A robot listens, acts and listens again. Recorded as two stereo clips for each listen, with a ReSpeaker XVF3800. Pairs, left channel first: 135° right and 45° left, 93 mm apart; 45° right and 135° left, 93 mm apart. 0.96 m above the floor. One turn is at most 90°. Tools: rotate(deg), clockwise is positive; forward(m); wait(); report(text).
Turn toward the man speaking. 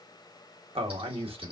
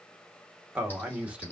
rotate(-60)
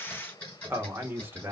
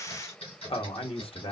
rotate(25)
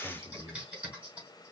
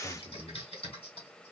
report("Facing the man speaking.")